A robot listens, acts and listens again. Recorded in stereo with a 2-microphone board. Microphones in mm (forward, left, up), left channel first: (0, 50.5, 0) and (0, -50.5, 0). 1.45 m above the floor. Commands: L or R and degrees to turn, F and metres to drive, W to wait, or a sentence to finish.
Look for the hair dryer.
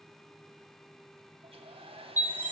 R70
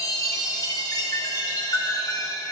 W
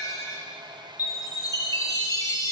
R45
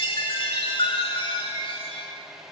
Found it: a hair dryer, straight ahead, under 1 m away.